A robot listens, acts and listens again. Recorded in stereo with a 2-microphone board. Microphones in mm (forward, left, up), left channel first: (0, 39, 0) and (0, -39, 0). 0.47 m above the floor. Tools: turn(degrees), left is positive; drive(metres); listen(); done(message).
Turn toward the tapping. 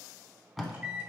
listen()
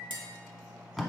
turn(degrees=-90)
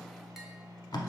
listen()
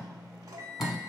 listen()
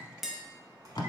done("Found it: tapping, straight ahead.")